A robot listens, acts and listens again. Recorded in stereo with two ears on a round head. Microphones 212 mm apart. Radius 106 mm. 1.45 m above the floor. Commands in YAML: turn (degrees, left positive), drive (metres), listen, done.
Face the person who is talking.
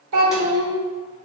turn: -70
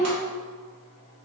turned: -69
turn: -30
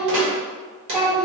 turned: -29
done: "Found it: a child speaking, straight ahead, under 1 m away."